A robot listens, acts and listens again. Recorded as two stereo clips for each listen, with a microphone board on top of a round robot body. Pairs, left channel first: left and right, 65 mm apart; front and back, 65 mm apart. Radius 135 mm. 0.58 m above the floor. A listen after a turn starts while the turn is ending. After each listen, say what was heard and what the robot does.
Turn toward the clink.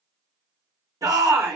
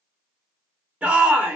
Keep listening.
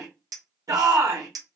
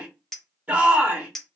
The clink: 85° right. Turn 85° right.
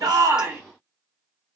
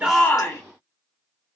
Keep listening.
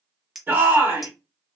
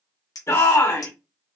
Found it: a clink, straight ahead, 1 to 2 m away.